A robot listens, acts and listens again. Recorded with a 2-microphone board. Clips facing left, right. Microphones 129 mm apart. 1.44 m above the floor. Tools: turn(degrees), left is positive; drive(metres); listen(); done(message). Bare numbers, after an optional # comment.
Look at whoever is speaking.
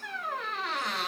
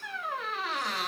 listen()
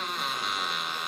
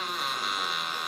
listen()
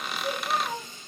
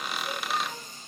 # The child speaking: about 50° left or 130° left.
turn(50)
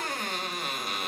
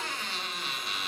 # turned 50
listen()
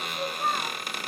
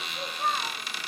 done("Facing the child speaking.")